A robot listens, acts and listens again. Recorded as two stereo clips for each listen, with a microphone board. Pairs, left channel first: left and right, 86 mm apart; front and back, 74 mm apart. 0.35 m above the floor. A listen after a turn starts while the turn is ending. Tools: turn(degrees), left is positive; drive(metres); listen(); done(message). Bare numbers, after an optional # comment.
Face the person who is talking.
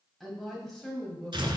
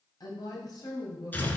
# The woman speaking: 10° left.
turn(10)
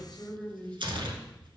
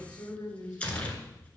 # The woman speaking is now 15° left.
turn(15)
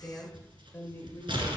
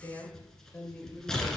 # The woman speaking is now 60° left.
turn(60)
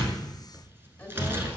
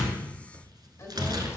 # The woman speaking is now 30° left.
turn(30)
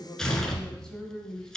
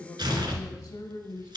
# The woman speaking is now 10° left.
turn(10)
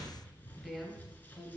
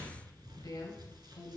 done("Facing the woman speaking, 1 to 2 m away.")